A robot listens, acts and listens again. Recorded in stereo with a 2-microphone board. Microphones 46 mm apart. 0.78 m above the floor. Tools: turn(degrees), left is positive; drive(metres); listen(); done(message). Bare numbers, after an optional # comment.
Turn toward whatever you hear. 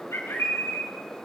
turn(90)
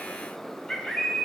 # So it is at 10° left.
turn(10)
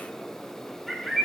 done("Facing the bird.")